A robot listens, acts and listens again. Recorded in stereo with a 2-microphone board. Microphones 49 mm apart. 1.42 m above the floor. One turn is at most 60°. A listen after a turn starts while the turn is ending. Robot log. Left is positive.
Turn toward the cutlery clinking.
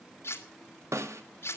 note: The cutlery clinking: about 55° left or 125° left.
cmd yaw +55
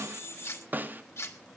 note: So it is at 65° left.
cmd yaw +60
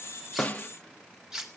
note: The cutlery clinking is now 10° right.
cmd yaw -10
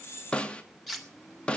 end: Facing the cutlery clinking.